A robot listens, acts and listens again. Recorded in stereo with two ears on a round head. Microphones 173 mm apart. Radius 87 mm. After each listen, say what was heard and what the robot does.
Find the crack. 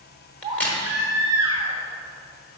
Turn 30° left.
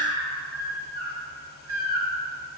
Keep listening.
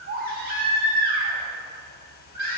I heard a crack, but can't make it out now. It was about 25° right or 145° left.